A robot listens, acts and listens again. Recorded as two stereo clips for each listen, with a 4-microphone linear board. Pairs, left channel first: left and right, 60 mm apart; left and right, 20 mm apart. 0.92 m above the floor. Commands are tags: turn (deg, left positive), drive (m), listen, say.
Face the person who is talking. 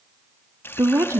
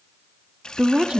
<turn deg="-45"/>
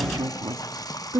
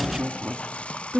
<turn deg="-90"/>
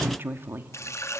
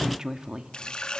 <turn deg="-35"/>
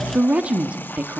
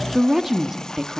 <turn deg="-20"/>
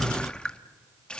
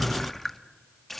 <listen/>
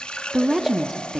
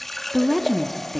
<say>Facing the woman speaking.</say>